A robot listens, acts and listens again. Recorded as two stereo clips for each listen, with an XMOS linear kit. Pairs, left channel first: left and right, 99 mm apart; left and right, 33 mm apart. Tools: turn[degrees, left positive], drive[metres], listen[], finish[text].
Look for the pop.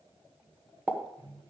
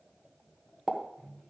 Thought: The pop: about 20° right or 160° right.
Action: turn[-20]
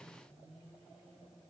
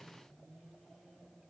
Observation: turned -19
Action: listen[]
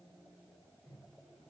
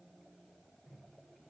Action: finish[I heard a pop, but can't make it out now. It was about straight ahead or 140° right.]